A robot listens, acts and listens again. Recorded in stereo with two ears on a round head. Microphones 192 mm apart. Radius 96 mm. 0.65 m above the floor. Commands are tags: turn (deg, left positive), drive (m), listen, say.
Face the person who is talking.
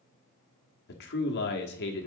<turn deg="50"/>
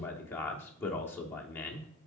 <turn deg="10"/>
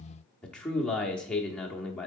<say>Facing the man speaking.</say>